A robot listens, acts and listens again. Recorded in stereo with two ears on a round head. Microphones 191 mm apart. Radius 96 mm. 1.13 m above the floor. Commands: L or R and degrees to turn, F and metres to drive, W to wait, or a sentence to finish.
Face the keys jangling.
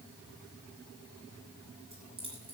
R25
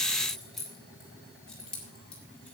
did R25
Facing the keys jangling, 2 to 4 m away.